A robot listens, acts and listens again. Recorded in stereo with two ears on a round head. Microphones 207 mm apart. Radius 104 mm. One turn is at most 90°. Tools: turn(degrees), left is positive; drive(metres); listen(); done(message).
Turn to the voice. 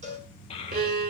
turn(degrees=25)
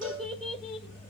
done("Facing the child speaking, 2 to 4 m away.")